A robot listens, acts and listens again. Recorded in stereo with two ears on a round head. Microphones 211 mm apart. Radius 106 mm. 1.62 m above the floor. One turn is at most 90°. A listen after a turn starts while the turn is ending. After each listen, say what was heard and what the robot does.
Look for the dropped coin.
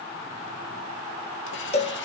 Keep listening.
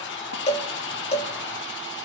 Keep listening.
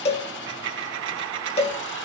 The dropped coin: about 60° right or 120° right. Turn 60° right.
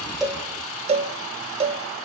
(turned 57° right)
Keep listening.
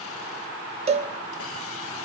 I heard a dropped coin, but can't make it out now. It was about straight ahead or 65° right.